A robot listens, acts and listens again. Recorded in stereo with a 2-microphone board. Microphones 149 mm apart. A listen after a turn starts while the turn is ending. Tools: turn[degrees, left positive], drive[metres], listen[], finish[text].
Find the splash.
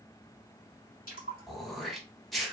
Thought: The splash: about 65° left or 115° left.
Action: turn[65]
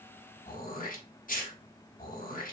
Action: listen[]
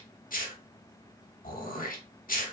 Action: finish[I heard a splash, but can't make it out now. It was about straight ahead or 50° left.]